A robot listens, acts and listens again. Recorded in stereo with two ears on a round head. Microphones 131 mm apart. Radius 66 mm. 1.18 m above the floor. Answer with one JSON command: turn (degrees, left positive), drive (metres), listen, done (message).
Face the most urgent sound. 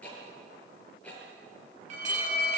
{"turn": -55}
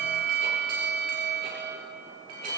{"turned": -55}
{"turn": -65}
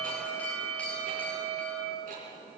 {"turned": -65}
{"turn": 10}
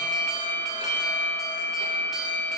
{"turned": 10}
{"done": "Found it: an alarm, straight ahead, over 4 m away."}